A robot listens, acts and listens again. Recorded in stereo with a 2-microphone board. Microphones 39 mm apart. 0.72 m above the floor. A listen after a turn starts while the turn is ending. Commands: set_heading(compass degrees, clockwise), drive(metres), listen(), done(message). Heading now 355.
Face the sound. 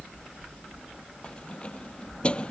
set_heading(325)
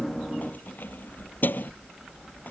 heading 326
set_heading(201)
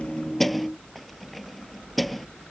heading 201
done("Found it: keys jangling, straight ahead.")